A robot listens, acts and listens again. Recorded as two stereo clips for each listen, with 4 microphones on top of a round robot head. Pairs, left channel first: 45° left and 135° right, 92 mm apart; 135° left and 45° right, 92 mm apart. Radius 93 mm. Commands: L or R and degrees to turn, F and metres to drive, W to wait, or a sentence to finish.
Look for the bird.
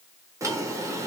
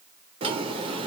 W
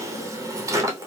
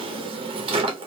W
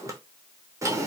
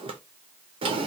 I can't make out a bird, only a drawer.